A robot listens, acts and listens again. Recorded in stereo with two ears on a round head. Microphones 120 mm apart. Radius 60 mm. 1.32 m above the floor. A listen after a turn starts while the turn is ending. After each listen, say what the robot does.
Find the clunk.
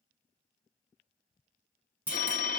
Turn 30° right.
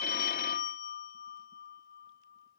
Keep listening.
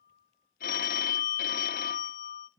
I heard a clunk, but can't make it out now. It was about 20° left or 140° right.